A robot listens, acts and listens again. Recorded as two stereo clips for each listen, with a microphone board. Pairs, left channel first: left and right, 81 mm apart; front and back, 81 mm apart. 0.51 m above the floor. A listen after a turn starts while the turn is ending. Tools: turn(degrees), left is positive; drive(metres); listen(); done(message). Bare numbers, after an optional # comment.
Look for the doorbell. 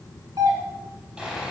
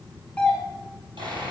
# The doorbell: 80° right.
turn(-80)
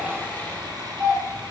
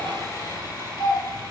# The doorbell is now 30° right.
turn(-30)
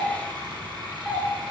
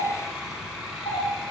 done("Facing the doorbell, 2 to 4 m away.")